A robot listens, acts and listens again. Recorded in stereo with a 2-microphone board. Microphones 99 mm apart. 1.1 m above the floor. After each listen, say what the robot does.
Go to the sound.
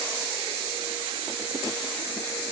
Keep listening.
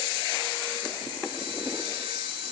Keep listening.
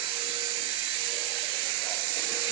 I can't make out anything to turn to.